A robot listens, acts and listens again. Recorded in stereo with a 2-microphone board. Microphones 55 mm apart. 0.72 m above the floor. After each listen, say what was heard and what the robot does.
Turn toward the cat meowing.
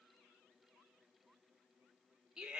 Keep listening.
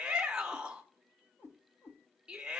The cat meowing: about 50° left or 130° left. Turn 50° left.
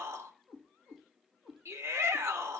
So it is at 10° right. Turn 10° right.
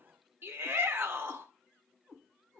Found it: a cat meowing, straight ahead, 2 to 4 m away.